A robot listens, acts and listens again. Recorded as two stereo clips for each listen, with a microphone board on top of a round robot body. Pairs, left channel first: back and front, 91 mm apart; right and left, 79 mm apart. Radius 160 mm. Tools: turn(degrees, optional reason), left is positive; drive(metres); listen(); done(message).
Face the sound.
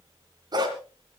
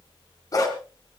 turn(degrees=-45, reason="The dog barking: 45° right.")
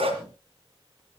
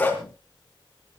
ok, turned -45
turn(degrees=-20, reason="The dog barking is now 20° right.")
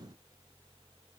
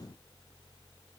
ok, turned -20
listen()
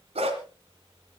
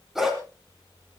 done("Facing the dog barking, 2 to 4 m away.")